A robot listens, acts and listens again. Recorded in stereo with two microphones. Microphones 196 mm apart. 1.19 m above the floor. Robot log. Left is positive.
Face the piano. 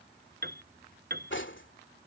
note: The piano: about 55° right or 125° right.
cmd yaw -55
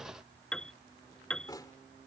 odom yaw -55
end: Found it: a piano, straight ahead.